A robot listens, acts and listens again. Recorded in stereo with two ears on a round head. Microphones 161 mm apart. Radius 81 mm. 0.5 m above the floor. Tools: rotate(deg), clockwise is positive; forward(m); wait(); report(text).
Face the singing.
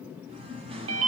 rotate(30)
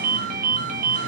wait()
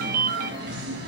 rotate(120)
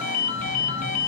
wait()
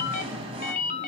rotate(30)
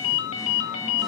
wait()
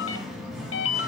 report("Found it: singing, straight ahead, 1 to 2 m away.")